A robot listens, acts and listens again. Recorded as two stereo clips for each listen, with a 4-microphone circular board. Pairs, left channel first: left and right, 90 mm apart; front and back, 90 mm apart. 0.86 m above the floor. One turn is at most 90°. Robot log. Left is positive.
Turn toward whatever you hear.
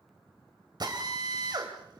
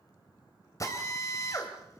note: The drill: 50° right.
cmd yaw -50
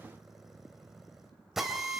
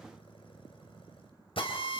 end: Facing the drill.